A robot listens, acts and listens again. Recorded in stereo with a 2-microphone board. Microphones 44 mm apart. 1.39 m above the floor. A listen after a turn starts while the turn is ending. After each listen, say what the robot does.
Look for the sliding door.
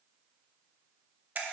Keep listening.
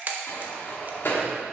Turn 60° left.
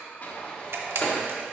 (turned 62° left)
Turn 35° left.
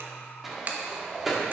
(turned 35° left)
Found it: a sliding door, straight ahead.